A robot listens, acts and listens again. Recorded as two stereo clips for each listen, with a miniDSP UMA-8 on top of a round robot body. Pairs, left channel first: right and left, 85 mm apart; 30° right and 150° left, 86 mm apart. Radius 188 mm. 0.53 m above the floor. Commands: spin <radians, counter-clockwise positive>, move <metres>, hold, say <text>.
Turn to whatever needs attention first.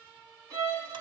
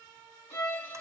hold
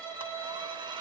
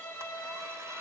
hold
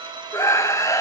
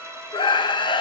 spin -0.70
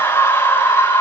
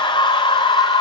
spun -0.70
spin -0.52
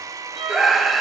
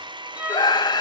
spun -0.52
say Found it: a scream, straight ahead, 1 to 2 m away.